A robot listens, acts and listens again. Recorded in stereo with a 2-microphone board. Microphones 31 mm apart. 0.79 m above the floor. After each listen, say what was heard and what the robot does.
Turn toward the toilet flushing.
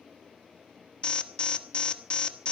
Keep listening.
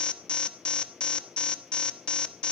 Keep listening.
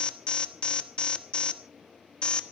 I can't make out a toilet flushing, only an alarm.